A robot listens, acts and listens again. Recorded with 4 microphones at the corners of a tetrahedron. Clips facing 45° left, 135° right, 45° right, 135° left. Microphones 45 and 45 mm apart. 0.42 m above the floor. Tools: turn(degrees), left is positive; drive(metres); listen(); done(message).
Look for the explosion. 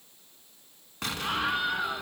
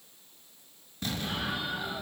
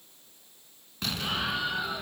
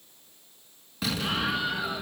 turn(degrees=50)
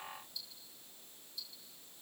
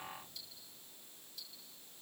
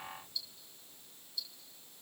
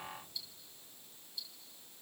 done("I heard an explosion from this way, but can't make it out now.")